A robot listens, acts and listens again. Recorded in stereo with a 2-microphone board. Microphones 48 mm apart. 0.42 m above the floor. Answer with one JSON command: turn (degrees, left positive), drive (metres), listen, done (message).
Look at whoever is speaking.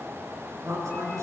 {"turn": -90}
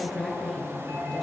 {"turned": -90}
{"done": "Found it: a woman speaking, straight ahead."}